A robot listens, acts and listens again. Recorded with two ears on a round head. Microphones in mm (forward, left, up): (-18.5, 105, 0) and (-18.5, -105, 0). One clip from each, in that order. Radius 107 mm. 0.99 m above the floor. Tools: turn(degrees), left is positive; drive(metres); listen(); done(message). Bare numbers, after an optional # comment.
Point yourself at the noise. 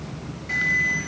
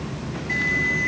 # The alarm: about 75° left or 105° left.
turn(75)
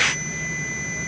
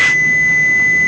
# So it is at 30° left.
turn(30)
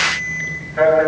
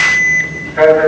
done("Facing the alarm.")